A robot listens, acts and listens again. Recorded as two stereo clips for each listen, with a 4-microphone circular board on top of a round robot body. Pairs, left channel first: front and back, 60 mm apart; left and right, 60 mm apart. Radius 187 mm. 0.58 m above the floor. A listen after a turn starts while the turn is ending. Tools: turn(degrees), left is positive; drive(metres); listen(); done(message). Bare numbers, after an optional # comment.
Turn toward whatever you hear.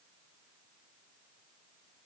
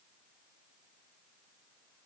listen()
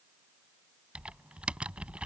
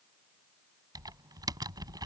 # The typing on a keyboard: 105° right.
turn(-105)
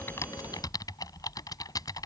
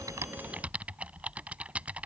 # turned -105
# The typing on a keyboard is now 20° right.
turn(-20)
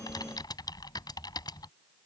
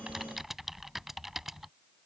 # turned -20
done("Found it: typing on a keyboard, straight ahead.")